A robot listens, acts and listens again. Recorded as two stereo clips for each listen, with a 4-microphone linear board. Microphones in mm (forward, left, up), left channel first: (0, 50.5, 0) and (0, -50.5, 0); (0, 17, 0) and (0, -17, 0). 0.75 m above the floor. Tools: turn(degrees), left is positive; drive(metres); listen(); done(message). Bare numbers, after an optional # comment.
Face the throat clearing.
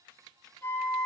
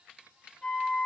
listen()
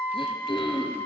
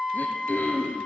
# The throat clearing: about 65° left or 115° left.
turn(65)
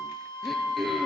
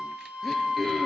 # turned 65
done("Facing the throat clearing.")